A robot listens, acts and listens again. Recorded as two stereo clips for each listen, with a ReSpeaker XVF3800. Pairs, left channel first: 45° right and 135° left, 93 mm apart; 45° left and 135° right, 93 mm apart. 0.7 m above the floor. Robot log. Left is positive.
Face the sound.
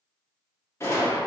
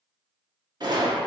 note: The gunshot: 100° right.
cmd yaw -100
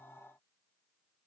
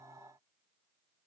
end: I heard a gunshot from this way, but can't make it out now.